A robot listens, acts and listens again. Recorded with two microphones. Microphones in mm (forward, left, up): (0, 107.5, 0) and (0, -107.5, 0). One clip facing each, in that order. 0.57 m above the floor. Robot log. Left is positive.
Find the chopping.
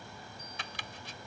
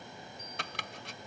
note: The chopping: about 70° right or 110° right.
cmd yaw -70
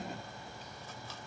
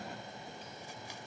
cmd idle
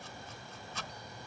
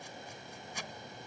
note: So it is at 15° right.
cmd yaw -15
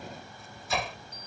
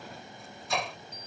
end: Facing the chopping.